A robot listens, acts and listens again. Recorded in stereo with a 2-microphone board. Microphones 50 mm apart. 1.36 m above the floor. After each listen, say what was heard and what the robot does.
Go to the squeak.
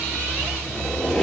Turn 30° left.
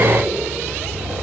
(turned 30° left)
Keep listening.
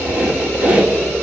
So it is at 25° right. Turn 25° right.
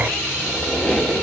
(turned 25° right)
Drive 1.0 m forward.
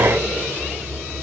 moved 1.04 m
Keep listening.
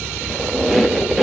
Drive 1.0 m forward.
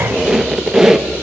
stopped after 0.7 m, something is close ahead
The squeak is now 10° right. Turn 10° right.
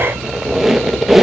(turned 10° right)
I am next to the squeak.